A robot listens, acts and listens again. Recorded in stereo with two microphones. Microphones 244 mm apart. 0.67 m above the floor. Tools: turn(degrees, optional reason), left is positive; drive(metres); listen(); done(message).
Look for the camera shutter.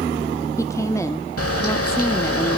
turn(degrees=70, reason="The camera shutter: about 70° left or 110° left.")
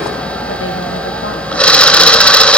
done("Found it: a camera shutter, straight ahead, under 1 m away.")